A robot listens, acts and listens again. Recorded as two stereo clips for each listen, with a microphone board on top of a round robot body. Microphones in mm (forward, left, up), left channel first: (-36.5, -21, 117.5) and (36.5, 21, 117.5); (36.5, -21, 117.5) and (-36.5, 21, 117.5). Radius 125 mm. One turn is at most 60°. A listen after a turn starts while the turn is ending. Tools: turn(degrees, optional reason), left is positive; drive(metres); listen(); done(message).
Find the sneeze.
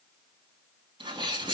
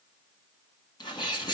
turn(degrees=10, reason="The sneeze: 10° left.")
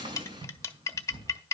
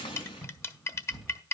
done("Facing the sneeze.")